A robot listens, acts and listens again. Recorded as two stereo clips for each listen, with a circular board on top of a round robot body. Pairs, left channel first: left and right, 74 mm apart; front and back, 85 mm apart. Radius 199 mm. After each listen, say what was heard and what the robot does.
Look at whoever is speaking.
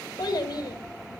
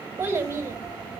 The child speaking: 115° left. Turn 115° left.
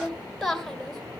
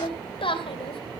Facing the child speaking, 2 to 4 m away.